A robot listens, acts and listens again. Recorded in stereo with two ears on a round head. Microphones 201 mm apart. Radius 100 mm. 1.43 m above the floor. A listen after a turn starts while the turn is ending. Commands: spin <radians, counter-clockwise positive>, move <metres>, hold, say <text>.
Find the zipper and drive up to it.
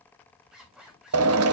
spin 0.52
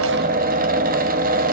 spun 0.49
hold
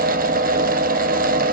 hold
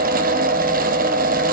say I heard a zipper, but can't make it out now. It was about 30° right or 155° left. I did not reach it.